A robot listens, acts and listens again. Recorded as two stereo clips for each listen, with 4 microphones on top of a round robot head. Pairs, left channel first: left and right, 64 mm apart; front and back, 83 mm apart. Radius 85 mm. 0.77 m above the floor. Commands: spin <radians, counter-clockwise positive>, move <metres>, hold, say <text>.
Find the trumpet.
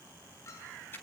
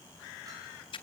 hold
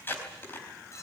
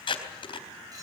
hold
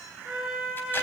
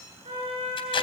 spin -2.88
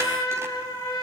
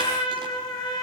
spin 0.52
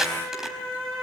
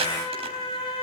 say Found it: a trumpet, straight ahead.